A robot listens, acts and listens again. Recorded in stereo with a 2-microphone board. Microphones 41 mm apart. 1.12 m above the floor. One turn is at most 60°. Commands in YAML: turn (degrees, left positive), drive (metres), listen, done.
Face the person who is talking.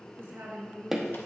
turn: -60
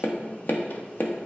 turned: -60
turn: -30
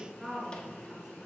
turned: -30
done: "Found it: a woman speaking, straight ahead, 2 to 4 m away."